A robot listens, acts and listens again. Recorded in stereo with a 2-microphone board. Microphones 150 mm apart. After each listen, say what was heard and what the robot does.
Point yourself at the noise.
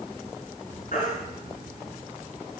The baby crying: about 60° left or 120° left. Turn 60° left.
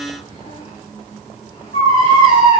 So it is at 60° left. Turn 60° left.
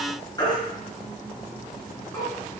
The baby crying is now 30° left. Turn 30° left.
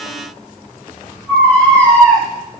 The baby crying is now 10° left. Turn 10° left.
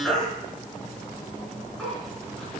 Found it: a baby crying, straight ahead.